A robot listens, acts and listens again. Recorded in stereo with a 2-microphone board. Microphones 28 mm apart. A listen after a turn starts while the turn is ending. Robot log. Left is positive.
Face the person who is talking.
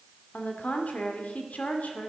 note: The woman speaking: about 60° left or 120° left.
cmd yaw +60
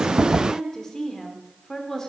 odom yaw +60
note: So it is at 20° left.
cmd yaw +20
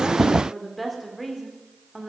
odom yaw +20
end: Found it: a woman speaking, straight ahead.